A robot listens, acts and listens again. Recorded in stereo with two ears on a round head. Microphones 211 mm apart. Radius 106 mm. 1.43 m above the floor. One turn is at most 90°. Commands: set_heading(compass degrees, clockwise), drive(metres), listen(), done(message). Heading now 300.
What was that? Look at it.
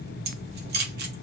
set_heading(345)
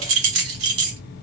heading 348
set_heading(73)
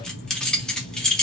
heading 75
done("Found it: keys jangling, straight ahead, under 1 m away.")